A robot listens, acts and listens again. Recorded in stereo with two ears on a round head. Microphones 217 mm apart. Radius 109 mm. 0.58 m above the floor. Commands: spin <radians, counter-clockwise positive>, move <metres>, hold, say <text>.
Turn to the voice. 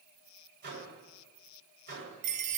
hold
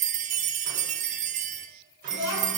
spin 0.52
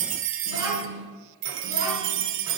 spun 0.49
spin -0.26
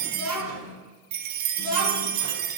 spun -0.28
say Facing the child speaking, over 4 m away.